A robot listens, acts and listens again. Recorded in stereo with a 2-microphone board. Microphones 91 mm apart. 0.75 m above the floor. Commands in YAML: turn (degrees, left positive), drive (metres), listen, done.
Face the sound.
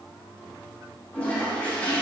turn: 30
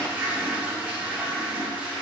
turn: -15
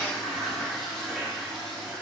done: "Facing the toilet flushing, under 1 m away."